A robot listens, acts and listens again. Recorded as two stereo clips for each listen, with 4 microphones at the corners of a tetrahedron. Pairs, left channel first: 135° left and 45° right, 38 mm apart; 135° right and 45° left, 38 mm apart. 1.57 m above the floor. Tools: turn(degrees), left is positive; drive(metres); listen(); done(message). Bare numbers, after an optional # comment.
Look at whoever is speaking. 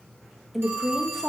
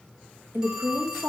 # The woman speaking: 50° left.
turn(50)
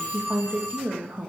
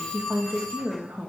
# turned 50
# The woman speaking is now 10° left.
turn(10)
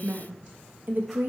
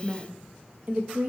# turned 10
done("Facing the woman speaking, 1 to 2 m away.")